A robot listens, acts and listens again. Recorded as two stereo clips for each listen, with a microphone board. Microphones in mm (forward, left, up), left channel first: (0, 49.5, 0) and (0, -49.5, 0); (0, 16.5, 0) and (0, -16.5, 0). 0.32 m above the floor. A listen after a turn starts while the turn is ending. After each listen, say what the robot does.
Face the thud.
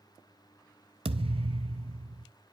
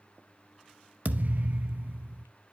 Turn 70° right.
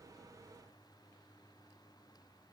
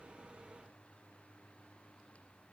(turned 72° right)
Keep listening.
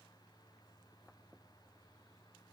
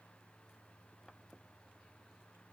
I heard a thud, but can't make it out now. It was about straight ahead or 40° right.